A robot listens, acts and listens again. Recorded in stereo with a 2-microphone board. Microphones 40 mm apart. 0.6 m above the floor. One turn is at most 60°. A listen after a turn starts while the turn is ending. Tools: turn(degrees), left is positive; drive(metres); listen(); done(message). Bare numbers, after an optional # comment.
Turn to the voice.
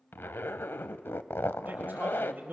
# The man speaking: about 55° right or 125° right.
turn(-55)
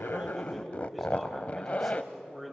done("Found it: a man speaking, straight ahead, 2 to 4 m away.")